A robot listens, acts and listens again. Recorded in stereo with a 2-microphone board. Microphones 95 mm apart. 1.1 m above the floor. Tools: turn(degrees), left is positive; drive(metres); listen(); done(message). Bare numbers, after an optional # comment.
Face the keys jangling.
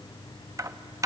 # The keys jangling: about 35° right or 145° right.
turn(-35)
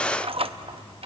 # So it is at 110° right.
turn(-110)
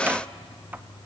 listen()
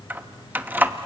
# The keys jangling is now 20° right.
turn(-20)
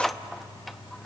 done("Facing the keys jangling, under 1 m away.")